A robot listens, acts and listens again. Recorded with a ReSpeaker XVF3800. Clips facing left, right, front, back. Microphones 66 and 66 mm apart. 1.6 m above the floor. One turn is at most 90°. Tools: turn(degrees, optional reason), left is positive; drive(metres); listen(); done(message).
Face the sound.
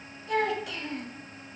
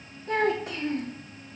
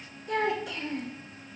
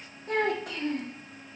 turn(degrees=-90, reason="The child speaking: 145° right.")
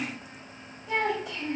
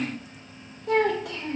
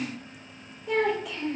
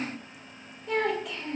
turn(degrees=-90, reason="The child speaking is now 90° right.")
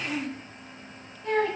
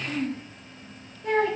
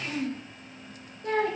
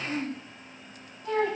turn(degrees=-10, reason="The child speaking is now 10° right.")
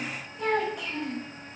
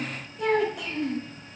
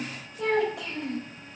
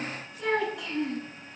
done("Facing the child speaking, over 4 m away.")